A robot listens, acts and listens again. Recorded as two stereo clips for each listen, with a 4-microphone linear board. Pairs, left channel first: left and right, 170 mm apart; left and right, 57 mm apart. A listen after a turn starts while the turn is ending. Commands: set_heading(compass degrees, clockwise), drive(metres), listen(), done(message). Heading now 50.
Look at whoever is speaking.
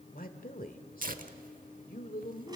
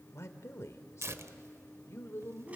set_heading(350)
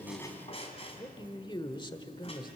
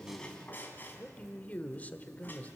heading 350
set_heading(315)
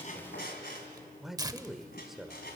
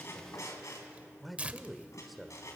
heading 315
done("Facing the man speaking, 1 to 2 m away.")